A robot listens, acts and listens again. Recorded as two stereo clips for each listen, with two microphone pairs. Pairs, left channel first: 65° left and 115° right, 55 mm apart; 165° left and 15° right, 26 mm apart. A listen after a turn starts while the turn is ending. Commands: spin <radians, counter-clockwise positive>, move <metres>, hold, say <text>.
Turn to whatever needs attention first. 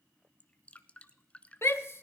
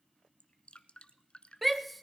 spin 1.22
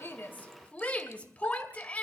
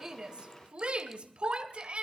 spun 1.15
say Facing the shout.